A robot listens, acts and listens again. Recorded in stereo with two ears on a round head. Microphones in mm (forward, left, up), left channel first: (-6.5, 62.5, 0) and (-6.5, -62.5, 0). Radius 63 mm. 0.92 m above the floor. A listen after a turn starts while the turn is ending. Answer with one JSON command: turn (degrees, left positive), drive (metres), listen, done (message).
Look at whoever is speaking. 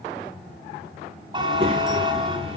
{"turn": -45}
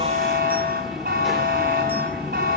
{"done": "Facing the child speaking."}